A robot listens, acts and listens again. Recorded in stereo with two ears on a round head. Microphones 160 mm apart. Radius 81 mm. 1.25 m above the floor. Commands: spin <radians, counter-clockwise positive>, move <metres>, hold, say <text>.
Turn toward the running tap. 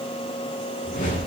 hold
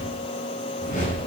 hold
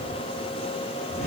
say I can't make out a running tap to turn to.